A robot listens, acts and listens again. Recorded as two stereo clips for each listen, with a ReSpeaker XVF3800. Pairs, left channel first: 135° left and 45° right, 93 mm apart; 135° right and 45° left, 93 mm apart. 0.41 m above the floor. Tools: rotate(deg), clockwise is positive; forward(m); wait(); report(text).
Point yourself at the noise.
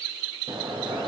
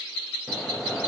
rotate(40)
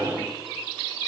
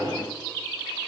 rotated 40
report("Found it: a sliding door, straight ahead.")